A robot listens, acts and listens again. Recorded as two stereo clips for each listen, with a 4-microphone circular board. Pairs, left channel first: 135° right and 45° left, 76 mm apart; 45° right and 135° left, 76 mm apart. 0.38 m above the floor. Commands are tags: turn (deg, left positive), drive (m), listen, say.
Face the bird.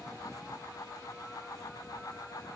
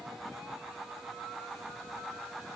<listen/>
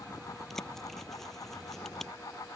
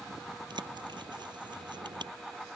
<turn deg="140"/>
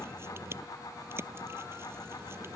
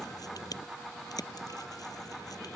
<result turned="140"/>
<turn deg="-10"/>
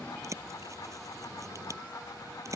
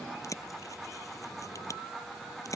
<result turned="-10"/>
<say>Found it: a bird, straight ahead.</say>